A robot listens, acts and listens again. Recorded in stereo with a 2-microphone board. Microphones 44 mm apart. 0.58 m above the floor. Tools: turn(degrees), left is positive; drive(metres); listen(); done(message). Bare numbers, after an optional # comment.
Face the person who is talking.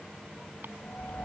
listen()
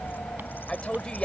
# The woman speaking: about 25° left or 155° left.
turn(25)
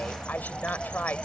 # So it is at 130° left.
turn(130)
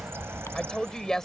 # The woman speaking is now 10° left.
turn(10)
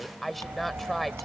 done("Found it: a woman speaking, straight ahead.")